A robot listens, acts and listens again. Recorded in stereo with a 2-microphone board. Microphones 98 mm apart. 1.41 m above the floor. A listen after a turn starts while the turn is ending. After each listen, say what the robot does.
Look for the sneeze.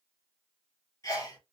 Turn 35° left.
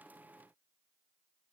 Keep listening.
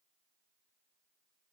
I heard a sneeze, but can't make it out now. It was about straight ahead or 110° left.